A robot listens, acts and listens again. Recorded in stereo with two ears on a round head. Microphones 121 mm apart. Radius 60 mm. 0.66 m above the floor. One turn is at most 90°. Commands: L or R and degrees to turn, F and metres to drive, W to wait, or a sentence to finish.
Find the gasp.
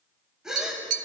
R30
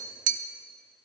W
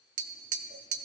I heard a gasp, but can't make it out now. It was about 25° left or 145° right.